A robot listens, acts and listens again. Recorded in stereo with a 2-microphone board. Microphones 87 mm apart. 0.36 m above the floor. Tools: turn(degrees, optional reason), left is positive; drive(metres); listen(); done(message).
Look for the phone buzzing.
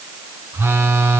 turn(degrees=-30, reason="The phone buzzing: about 30° right or 150° right.")
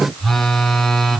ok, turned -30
done("Facing the phone buzzing, 1 to 2 m away.")